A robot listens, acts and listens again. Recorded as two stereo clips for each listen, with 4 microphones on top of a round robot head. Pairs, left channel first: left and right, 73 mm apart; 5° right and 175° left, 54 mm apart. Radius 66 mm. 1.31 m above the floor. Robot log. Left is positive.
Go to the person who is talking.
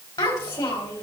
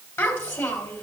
note: The child speaking: 35° left.
cmd yaw +35
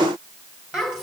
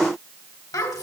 cmd fwd 1.0
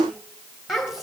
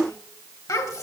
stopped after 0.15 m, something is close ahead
end: Blocked. The child speaking is further on, straight ahead.